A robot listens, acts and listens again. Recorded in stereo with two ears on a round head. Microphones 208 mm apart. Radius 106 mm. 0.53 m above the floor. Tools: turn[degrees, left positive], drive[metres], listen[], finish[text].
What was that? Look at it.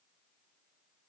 Action: listen[]
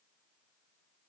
Action: listen[]
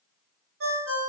Thought: The ringtone: about 55° right or 125° right.
Action: turn[-55]
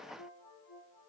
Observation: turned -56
Action: listen[]
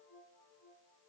Action: listen[]
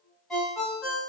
Action: finish[Found it: a ringtone, straight ahead, under 1 m away.]